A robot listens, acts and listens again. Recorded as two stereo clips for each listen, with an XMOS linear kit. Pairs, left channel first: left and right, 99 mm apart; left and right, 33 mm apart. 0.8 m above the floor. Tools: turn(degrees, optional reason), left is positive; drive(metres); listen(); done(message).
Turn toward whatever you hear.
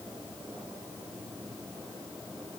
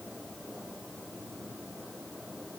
listen()
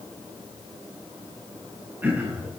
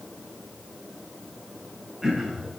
turn(degrees=-20, reason="The throat clearing: about 20° right or 160° right.")
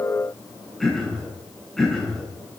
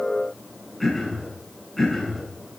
done("Facing the throat clearing.")